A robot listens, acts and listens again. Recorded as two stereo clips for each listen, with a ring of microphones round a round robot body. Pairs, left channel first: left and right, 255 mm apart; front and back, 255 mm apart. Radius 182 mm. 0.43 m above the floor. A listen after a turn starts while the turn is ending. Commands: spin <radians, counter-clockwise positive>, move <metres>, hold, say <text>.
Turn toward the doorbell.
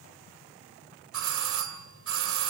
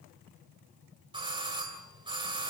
spin -1.83
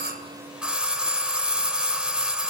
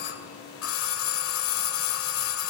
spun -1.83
say Found it: a doorbell, straight ahead, 2 to 4 m away.